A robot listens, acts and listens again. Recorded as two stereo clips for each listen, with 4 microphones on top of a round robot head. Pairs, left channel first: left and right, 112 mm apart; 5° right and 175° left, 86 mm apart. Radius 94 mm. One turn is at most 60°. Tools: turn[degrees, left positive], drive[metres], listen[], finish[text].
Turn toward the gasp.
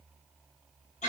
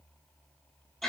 Action: listen[]
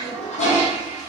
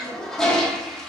Action: listen[]
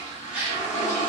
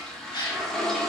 Thought: The gasp: 15° right.
Action: turn[-15]
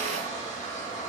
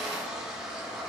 Action: finish[Facing where the gasp came from. I can't hear it now.]